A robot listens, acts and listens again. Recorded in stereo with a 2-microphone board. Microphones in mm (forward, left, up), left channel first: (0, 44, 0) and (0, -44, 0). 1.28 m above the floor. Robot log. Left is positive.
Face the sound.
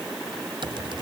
note: The typing on a keyboard: about 70° right or 110° right.
cmd yaw -70
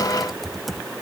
end: Found it: typing on a keyboard, straight ahead.